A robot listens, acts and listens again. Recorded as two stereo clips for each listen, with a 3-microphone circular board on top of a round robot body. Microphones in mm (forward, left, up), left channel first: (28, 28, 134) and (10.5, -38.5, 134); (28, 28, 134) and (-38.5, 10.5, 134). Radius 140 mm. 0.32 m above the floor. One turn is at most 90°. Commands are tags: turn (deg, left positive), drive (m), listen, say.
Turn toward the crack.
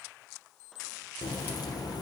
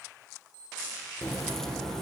<turn deg="90"/>
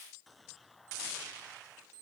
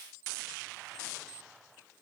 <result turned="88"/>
<turn deg="10"/>
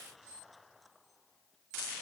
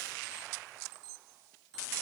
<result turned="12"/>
<say>I heard a crack from this way, but can't make it out now.</say>